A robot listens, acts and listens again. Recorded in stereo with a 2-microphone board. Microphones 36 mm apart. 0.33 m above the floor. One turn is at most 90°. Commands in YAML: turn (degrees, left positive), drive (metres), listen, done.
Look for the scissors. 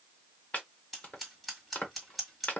turn: -30
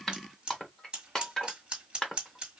turn: -90
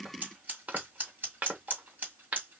turn: -75
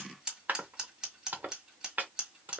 turn: -20
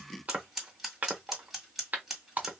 done: "Facing the scissors, 1 to 2 m away."